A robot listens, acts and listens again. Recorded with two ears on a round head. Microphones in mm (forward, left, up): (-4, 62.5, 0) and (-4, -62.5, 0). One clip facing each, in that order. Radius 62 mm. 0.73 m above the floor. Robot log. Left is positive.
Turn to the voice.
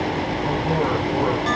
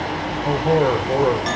note: The man speaking: about 45° right or 135° right.
cmd yaw -45
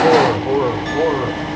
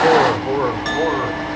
note: So it is at 20° left.
cmd yaw +20
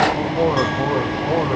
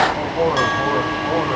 end: Facing the man speaking.